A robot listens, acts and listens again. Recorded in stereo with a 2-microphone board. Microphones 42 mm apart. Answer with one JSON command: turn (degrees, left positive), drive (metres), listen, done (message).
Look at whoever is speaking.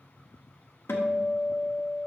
{"listen": true}
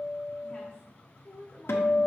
{"turn": 20}
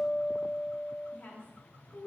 {"turn": 140}
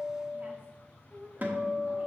{"turn": -40}
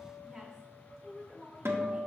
{"turn": -10}
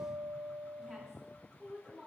{"done": "Found it: a woman speaking, straight ahead."}